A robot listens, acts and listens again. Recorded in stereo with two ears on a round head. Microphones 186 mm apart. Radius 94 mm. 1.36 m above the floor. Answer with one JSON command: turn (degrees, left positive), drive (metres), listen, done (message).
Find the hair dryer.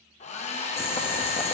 {"turn": 35}
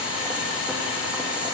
{"listen": true}
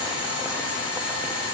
{"listen": true}
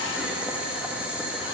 {"done": "I heard a hair dryer, but can't make it out now. It was about straight ahead or 110° left."}